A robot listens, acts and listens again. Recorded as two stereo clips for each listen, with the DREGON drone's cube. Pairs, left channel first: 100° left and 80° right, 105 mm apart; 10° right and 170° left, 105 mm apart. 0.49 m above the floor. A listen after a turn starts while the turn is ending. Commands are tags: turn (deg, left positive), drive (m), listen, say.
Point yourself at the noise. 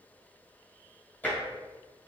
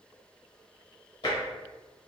<turn deg="30"/>
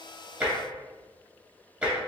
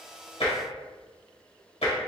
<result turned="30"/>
<say>Found it: tapping, straight ahead.</say>